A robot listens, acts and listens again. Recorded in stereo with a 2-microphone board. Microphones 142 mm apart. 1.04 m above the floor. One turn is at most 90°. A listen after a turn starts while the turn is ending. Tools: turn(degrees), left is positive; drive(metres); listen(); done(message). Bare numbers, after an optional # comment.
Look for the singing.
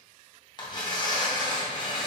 listen()
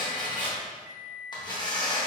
listen()
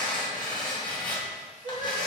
# The singing: about 65° right or 115° right.
turn(-65)
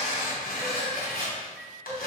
# So it is at 30° right.
turn(-30)
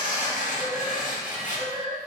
# The singing is now 10° right.
turn(-10)
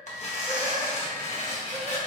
listen()
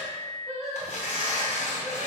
done("Facing the singing, 2 to 4 m away.")